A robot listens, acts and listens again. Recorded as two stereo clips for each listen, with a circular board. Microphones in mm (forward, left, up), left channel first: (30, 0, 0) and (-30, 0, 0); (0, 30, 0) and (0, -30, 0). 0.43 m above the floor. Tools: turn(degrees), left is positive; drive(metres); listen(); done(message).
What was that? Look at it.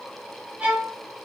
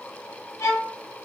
turn(degrees=115)
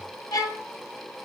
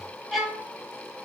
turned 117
done("Facing the violin, 1 to 2 m away.")